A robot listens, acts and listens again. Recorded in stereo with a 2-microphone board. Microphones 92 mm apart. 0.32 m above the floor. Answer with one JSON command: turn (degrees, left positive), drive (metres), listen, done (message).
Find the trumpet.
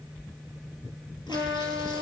{"turn": -70}
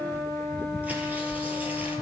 {"turn": -40}
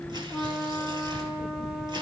{"done": "Facing the trumpet."}